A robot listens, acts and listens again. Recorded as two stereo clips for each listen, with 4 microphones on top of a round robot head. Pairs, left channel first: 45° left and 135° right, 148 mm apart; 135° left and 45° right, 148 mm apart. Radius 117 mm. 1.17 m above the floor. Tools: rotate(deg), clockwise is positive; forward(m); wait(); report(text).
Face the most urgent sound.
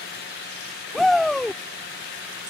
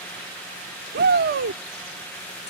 rotate(45)
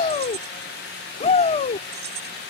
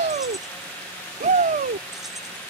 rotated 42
report("Facing the shout.")